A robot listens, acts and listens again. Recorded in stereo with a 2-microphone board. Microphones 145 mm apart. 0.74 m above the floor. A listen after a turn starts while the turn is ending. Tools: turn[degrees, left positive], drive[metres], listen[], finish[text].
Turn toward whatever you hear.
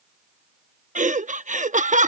Thought: The laughter: about 60° right or 120° right.
Action: turn[-60]
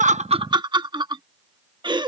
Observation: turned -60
Thought: So it is at 35° right.
Action: turn[-35]
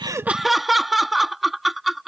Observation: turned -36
Action: finish[Facing the laughter.]